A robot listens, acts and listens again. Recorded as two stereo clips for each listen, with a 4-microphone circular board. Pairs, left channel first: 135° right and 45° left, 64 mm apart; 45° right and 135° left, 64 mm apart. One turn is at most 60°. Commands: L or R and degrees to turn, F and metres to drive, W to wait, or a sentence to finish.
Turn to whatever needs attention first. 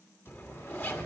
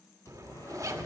W
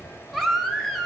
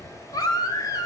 R45
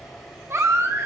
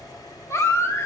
Facing the baby crying.